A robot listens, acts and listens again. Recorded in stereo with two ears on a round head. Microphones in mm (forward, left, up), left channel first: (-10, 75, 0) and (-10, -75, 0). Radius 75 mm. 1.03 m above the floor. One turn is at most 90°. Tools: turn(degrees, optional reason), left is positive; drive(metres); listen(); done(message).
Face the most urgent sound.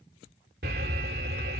turn(degrees=-60, reason="The alarm: about 60° right or 120° right.")
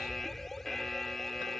done("Found it: an alarm, straight ahead.")